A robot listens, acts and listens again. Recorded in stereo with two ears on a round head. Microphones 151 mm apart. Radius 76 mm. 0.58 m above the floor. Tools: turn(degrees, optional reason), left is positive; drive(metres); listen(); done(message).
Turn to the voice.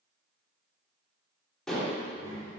turn(degrees=20, reason="The child speaking: about 20° left or 160° left.")
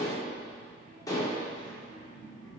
turn(degrees=35, reason="The child speaking: about 35° left or 145° left.")
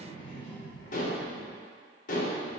turn(degrees=115, reason="So it is at 115° left.")
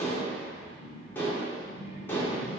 turn(degrees=10, reason="The child speaking is now 10° left.")
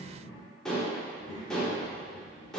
done("Found it: a child speaking, straight ahead, 2 to 4 m away.")